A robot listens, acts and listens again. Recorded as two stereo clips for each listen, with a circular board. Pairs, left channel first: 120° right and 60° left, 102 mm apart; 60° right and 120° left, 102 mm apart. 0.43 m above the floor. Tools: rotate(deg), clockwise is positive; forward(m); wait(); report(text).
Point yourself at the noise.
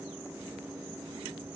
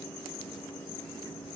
wait()
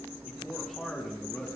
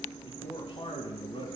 rotate(35)
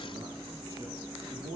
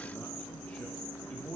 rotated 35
rotate(-10)
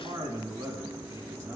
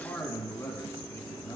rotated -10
report("Found it: a man speaking, straight ahead.")